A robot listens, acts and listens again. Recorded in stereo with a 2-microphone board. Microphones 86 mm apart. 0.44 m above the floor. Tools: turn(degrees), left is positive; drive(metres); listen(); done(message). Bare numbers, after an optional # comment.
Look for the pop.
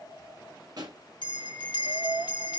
# The pop: about 50° right or 130° right.
turn(-50)
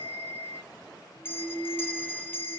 listen()
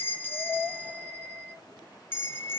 done("I heard a pop, but can't make it out now. It was about straight ahead or 80° right.")